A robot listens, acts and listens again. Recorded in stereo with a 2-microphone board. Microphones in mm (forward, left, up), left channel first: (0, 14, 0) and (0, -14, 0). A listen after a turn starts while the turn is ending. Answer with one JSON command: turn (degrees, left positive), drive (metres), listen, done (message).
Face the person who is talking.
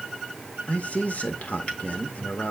{"turn": 55}
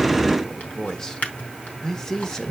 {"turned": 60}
{"turn": 25}
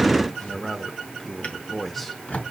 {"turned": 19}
{"turn": 10}
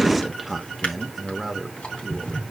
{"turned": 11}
{"done": "Found it: a man speaking, straight ahead."}